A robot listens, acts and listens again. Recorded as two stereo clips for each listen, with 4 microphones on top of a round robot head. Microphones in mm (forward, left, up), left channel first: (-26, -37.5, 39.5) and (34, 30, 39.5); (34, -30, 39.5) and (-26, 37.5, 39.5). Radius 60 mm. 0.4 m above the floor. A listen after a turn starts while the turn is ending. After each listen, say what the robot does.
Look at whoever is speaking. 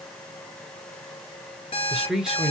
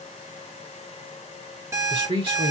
Turn 130° left.
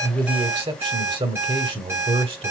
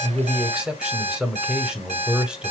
Turn 50° left.
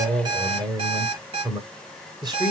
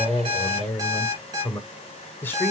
Turn 15° left.
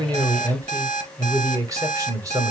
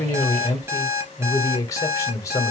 Facing the man speaking, 1 to 2 m away.